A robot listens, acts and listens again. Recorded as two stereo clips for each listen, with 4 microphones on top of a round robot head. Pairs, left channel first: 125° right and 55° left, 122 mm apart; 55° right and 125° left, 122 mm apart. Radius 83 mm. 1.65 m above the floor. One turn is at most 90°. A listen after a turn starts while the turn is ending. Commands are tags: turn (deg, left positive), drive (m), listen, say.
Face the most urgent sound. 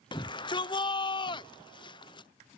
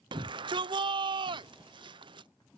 <turn deg="90"/>
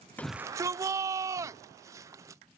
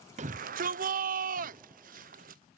<turn deg="90"/>
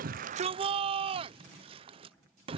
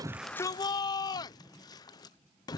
<say>Found it: a shout, straight ahead.</say>